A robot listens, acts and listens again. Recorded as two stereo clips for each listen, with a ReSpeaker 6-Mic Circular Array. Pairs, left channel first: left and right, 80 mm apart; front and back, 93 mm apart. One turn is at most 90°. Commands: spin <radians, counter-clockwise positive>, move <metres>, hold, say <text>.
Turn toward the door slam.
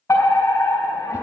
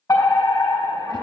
hold
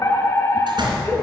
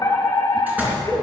spin -1.57
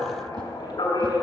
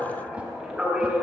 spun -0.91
spin -0.96
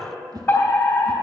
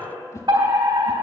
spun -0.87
say I heard a door slam from this way, but can't make it out now.